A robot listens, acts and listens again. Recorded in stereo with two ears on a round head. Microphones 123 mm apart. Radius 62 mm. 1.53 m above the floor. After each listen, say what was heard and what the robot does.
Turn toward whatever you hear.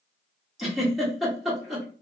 Turn 30° left.
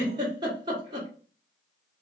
So it is at 30° right. Turn 30° right.
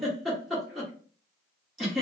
Facing the giggle, 1 to 2 m away.